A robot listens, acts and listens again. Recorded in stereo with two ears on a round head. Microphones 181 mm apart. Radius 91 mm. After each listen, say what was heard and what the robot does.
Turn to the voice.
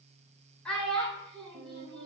Turn 30° left.
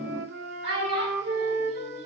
So it is at 25° right. Turn 25° right.
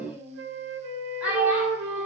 Facing the child speaking, 1 to 2 m away.